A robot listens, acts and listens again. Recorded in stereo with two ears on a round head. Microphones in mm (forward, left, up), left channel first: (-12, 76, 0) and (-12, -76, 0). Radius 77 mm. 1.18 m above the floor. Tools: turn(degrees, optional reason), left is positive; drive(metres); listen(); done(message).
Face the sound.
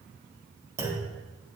turn(degrees=-15, reason="The clunk: about 15° right or 165° right.")
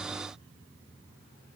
listen()
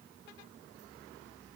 done("I heard a clunk, but can't make it out now. It was about straight ahead or 150° right.")